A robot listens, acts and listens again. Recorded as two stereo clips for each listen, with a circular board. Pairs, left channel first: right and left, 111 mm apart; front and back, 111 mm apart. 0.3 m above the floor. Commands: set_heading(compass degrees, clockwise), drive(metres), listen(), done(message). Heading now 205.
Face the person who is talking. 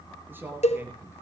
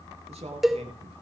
set_heading(45)
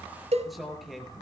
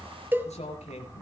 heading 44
done("Found it: a man speaking, straight ahead, over 4 m away.")